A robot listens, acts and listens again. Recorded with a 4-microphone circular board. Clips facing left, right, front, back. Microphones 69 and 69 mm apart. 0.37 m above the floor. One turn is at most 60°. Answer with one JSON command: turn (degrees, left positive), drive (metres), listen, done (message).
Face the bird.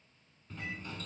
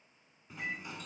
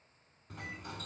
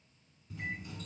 {"listen": true}
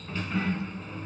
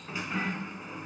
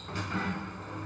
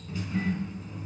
{"listen": true}
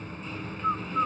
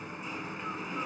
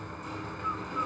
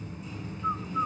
{"turn": 60}
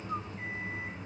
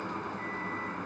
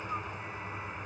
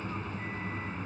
{"turn": 50}
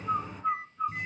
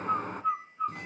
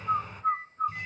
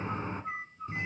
{"done": "Found it: a bird, straight ahead."}